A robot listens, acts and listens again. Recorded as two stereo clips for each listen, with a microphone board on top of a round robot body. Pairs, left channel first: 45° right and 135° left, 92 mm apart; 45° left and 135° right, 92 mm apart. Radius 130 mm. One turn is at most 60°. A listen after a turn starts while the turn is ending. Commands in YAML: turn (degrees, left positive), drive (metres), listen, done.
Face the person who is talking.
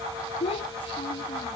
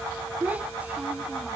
turn: -60
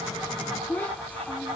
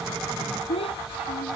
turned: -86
turn: 25
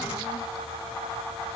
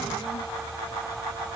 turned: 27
listen: true
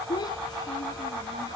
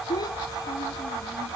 done: "Found it: a child speaking, straight ahead."